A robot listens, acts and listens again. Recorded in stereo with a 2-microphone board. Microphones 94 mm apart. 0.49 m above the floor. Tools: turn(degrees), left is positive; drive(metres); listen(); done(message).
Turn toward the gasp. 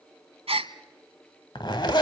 turn(degrees=-90)
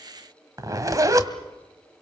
done("I heard a gasp from this way, but can't make it out now.")